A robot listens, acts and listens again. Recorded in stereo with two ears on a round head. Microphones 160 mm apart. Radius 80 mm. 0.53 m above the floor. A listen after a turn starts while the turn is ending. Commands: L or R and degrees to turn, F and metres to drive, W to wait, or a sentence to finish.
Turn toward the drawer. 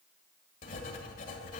W
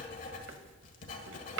R90
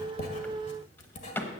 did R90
L10
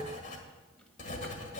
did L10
W
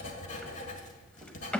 Facing the drawer.